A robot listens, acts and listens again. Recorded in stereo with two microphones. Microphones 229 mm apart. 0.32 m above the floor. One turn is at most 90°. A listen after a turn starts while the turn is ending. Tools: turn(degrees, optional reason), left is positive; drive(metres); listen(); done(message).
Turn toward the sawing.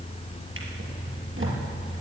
listen()
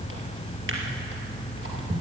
listen()
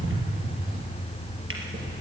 done("I can't make out sawing, only a drawer.")